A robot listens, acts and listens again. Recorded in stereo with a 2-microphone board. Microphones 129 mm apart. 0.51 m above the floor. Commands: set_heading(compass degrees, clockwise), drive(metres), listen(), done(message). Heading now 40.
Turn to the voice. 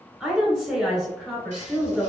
set_heading(70)
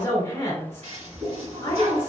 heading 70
set_heading(40)
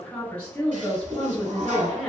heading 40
set_heading(30)
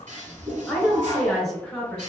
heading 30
done("Facing the woman speaking, 1 to 2 m away.")